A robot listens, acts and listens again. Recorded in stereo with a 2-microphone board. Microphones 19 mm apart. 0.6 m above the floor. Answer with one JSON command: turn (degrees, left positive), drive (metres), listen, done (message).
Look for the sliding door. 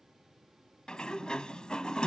{"turn": 60}
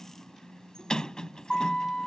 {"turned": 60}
{"turn": 55}
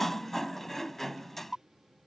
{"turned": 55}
{"turn": 15}
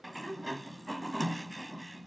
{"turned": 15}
{"done": "Found it: a sliding door, straight ahead."}